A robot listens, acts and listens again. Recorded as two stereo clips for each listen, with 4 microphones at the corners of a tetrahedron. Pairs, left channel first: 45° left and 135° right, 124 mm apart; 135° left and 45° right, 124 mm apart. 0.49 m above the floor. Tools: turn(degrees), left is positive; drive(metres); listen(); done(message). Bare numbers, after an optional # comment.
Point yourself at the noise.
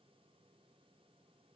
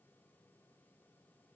listen()
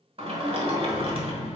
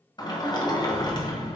# The sliding door: 175° right.
turn(-175)
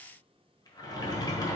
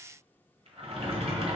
# The sliding door is now 10° right.
turn(-10)
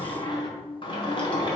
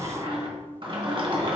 done("Found it: a sliding door, straight ahead, 1 to 2 m away.")